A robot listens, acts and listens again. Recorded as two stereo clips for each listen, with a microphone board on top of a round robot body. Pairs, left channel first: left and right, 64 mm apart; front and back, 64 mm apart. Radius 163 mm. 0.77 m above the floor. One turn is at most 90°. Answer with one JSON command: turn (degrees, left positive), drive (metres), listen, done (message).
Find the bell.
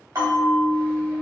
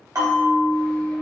{"turn": -90}
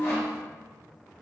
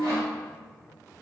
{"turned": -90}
{"turn": -30}
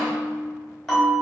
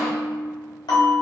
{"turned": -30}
{"done": "Facing the bell."}